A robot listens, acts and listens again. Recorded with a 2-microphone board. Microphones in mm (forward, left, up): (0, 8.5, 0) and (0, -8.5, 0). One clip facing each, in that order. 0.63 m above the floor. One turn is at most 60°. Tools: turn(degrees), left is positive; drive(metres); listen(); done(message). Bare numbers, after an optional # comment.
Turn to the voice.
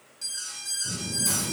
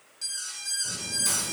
# The child speaking: about 70° right or 110° right.
turn(-60)
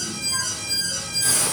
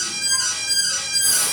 listen()
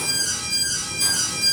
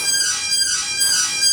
# So it is at 15° left.
turn(15)
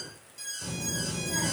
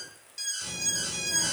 # The child speaking is now 20° left.
turn(20)
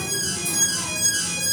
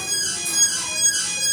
listen()
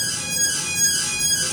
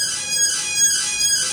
done("Facing the child speaking, 2 to 4 m away.")